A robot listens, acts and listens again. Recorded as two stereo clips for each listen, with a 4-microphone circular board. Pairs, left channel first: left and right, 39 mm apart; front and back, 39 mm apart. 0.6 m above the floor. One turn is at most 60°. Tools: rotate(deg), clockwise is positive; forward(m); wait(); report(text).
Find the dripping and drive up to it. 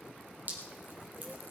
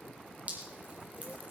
rotate(60)
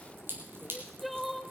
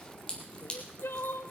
rotate(60)
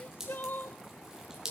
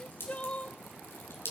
rotate(10)
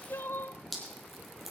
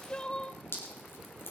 forward(1.0)
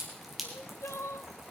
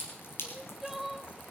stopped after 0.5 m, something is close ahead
report("Something is in my way. I am facing the dripping but have not reached it.")